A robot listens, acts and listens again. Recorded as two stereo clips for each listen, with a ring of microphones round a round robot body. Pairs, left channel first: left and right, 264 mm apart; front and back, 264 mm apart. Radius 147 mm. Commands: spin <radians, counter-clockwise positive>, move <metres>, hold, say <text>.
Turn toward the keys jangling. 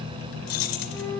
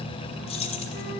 spin 1.22
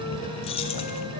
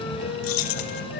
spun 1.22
spin 0.35
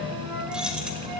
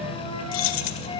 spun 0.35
say Found it: keys jangling, straight ahead.